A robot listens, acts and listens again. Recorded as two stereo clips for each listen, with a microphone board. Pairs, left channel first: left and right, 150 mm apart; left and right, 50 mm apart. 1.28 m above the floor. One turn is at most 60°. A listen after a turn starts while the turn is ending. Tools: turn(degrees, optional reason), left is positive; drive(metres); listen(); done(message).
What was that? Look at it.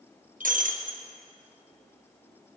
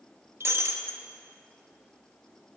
turn(degrees=-60, reason="The breaking glass: about 60° right or 120° right.")
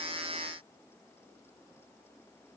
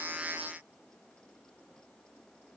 listen()
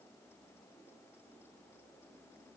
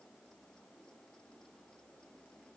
done("I heard breaking glass, but can't make it out now. It was about straight ahead or 60° right.")